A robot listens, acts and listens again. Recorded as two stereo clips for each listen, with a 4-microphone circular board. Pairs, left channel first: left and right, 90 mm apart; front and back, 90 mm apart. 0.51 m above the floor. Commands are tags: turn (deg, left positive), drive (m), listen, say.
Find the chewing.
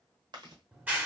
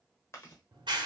<turn deg="-60"/>
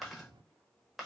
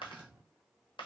<say>Found it: chewing, straight ahead, under 1 m away.</say>